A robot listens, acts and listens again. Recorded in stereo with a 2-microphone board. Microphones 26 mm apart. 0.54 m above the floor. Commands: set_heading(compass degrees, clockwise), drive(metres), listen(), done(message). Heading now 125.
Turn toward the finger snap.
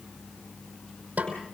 listen()
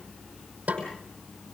listen()
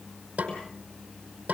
done("I can't make out a finger snap, only a snare drum.")